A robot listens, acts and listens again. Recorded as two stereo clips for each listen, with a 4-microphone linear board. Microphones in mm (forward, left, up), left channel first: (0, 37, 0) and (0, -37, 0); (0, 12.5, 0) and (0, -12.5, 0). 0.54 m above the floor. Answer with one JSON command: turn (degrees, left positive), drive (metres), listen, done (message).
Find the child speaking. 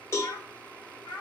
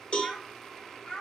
{"turn": 90}
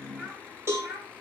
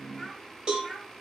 {"turn": -15}
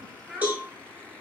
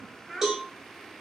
{"done": "Facing the child speaking, 2 to 4 m away."}